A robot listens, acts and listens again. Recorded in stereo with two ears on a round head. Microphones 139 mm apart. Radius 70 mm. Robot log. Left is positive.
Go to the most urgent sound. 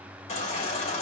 note: The baby crying: about 45° left or 135° left.
cmd yaw +45
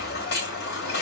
note: So it is at 90° left.
cmd yaw +90
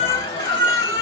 note: The baby crying is now 35° left.
cmd yaw +35
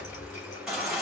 cmd fwd 1.0
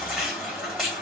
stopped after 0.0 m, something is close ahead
end: Something is in my way. I am facing the baby crying but have not reached it.